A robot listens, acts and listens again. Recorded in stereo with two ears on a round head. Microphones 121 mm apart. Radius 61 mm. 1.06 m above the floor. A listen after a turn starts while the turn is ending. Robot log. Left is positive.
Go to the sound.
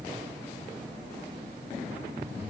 cmd idle
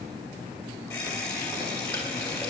cmd yaw +30
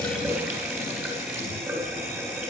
note: So it is at 15° right.
cmd yaw -15
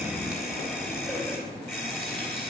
cmd fwd 1.0
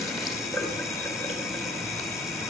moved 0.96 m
cmd fwd 1.0
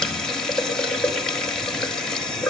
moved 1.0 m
cmd fwd 1.0
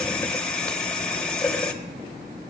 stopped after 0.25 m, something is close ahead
end: Arrived at the running tap, straight ahead.